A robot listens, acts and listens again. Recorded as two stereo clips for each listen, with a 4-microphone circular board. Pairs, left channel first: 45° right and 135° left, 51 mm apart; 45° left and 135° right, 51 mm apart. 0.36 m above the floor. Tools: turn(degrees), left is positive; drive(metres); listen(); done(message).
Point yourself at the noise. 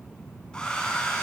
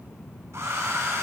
turn(degrees=-115)
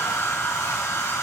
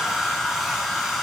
turn(degrees=-50)
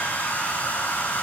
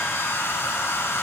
turn(degrees=10)
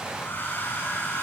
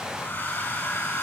done("Facing the hair dryer, 2 to 4 m away.")